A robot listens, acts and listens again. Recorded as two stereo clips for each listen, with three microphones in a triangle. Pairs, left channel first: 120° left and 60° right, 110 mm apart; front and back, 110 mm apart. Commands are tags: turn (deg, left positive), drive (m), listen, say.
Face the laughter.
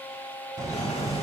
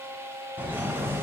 <turn deg="-110"/>
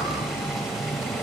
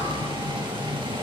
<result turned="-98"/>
<turn deg="-15"/>
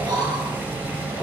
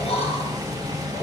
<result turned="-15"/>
<turn deg="-10"/>
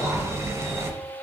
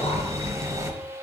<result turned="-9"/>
<say>Facing the laughter.</say>